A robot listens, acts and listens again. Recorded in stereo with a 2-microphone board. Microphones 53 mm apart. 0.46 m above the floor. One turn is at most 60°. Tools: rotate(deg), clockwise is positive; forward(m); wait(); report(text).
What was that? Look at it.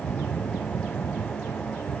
wait()
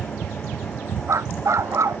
rotate(60)
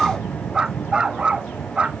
rotate(20)
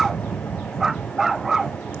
rotate(10)
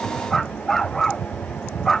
report("Found it: a dog barking, straight ahead.")